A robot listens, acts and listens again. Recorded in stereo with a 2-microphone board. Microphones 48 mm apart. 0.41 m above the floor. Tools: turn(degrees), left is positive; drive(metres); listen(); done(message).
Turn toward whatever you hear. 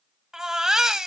turn(degrees=-30)
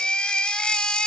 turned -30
turn(degrees=20)
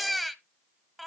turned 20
done("Found it: a baby crying, straight ahead.")